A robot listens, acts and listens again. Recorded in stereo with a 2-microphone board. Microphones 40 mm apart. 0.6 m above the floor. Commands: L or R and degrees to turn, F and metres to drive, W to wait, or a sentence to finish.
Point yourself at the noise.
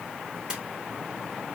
R20
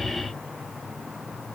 W
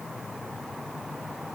I heard a splash, but can't make it out now. It was about straight ahead or 140° right.